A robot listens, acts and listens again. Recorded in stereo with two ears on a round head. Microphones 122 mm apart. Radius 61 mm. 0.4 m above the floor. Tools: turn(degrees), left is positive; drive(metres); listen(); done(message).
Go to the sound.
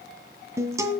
turn(degrees=-25)
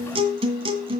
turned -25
turn(degrees=-135)
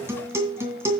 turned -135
turn(degrees=-20)
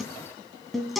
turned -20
drive(metres=1.0)
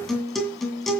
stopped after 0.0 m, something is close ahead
done("Blocked. The guitar is further on, straight ahead.")